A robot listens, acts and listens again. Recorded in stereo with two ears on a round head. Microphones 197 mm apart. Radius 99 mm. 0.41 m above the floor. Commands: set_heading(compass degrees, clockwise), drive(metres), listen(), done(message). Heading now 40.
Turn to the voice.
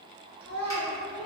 set_heading(105)
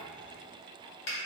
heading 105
listen()
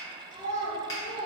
set_heading(125)
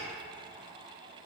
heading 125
listen()
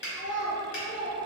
done("Facing the child speaking.")